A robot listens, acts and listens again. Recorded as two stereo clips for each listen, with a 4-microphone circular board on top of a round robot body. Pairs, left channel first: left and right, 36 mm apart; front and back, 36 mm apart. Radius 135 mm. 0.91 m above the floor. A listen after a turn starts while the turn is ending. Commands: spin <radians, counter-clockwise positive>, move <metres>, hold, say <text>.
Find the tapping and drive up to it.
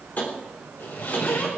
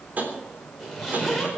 spin 2.36
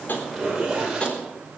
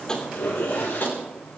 spin 0.52
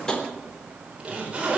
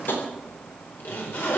hold
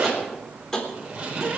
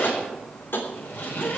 spin 0.35
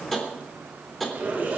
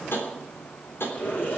spin 0.17
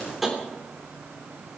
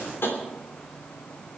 move 1.0
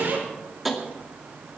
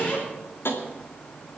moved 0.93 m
move 1.0
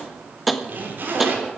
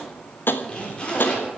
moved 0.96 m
move 1.0
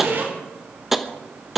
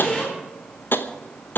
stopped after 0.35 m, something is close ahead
say Arrived at the tapping, straight ahead.